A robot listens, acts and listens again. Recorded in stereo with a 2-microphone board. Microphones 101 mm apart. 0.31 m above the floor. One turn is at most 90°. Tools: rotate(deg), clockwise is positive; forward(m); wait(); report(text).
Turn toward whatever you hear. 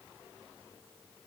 wait()
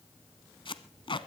rotate(-55)
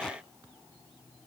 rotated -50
wait()
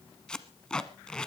rotate(-10)
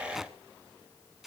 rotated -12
report("Facing the tape being pulled, 1 to 2 m away.")